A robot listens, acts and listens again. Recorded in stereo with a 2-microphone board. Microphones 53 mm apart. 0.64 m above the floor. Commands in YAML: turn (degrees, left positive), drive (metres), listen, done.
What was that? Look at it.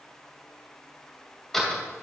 turn: 30
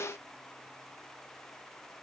listen: true
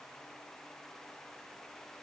done: "I heard a door slam, but can't make it out now. It was about 25° right or 145° left."